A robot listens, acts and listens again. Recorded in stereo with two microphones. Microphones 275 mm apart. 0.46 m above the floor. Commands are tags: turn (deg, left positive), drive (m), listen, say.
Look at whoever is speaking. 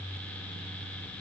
<listen/>
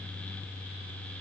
<listen/>
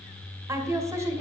<turn deg="-30"/>
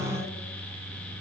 <listen/>
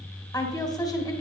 <turn deg="15"/>
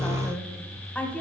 <say>Found it: a woman speaking, straight ahead.</say>